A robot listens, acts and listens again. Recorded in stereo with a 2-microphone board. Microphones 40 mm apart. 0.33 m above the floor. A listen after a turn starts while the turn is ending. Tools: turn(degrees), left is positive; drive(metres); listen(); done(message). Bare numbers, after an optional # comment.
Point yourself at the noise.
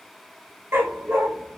turn(-90)
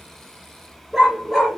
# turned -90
# So it is at 10° right.
turn(-10)
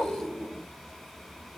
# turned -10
listen()
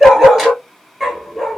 done("Facing the dog barking.")